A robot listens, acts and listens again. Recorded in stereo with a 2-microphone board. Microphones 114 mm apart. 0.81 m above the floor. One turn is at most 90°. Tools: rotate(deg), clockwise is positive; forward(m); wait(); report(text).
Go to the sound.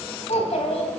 rotate(-70)
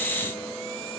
wait()
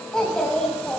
forward(1.0)
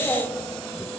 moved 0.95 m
rotate(-10)
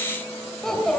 forward(1.0)
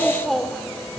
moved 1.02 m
forward(1.0)
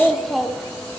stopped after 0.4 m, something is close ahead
report("Arrived at the child speaking, straight ahead.")